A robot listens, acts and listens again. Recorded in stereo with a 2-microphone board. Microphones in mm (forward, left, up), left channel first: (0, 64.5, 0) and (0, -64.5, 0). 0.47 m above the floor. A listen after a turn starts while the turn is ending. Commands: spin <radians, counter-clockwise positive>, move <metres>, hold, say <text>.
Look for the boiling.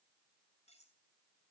hold
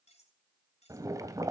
spin -0.52
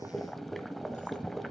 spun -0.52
say Facing the boiling, 1 to 2 m away.